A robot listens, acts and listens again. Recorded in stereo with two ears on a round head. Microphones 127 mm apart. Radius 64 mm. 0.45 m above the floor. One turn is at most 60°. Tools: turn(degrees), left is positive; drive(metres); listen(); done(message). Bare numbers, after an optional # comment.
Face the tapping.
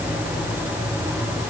listen()
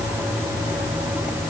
listen()
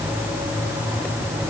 done("I can't make out tapping.")